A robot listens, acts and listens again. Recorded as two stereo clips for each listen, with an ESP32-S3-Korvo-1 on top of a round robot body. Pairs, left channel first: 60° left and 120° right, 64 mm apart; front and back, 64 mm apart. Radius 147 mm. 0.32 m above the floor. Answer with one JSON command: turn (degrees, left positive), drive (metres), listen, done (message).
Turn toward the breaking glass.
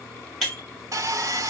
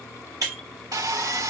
{"turn": 140}
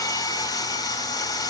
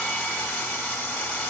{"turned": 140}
{"done": "I heard breaking glass from this way, but can't make it out now."}